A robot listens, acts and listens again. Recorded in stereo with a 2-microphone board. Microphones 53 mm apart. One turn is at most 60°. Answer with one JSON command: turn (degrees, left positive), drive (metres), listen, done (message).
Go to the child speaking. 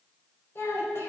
{"turn": 55}
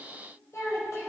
{"turn": 60}
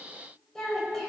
{"turn": 10}
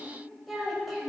{"drive": 1.0}
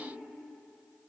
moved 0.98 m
{"listen": true}
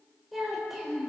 {"drive": 1.0}
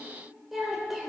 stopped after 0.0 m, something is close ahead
{"done": "Something is in my way. I am facing the child speaking but have not reached it."}